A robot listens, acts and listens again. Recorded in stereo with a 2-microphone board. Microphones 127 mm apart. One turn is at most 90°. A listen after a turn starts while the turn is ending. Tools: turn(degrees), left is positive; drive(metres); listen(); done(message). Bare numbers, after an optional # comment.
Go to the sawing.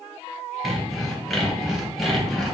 turn(30)
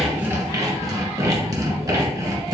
# So it is at 30° right.
turn(-30)
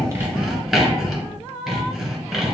drive(1.0)
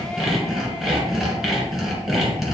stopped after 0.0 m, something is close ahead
done("Something is in my way. I am facing the sawing but have not reached it.")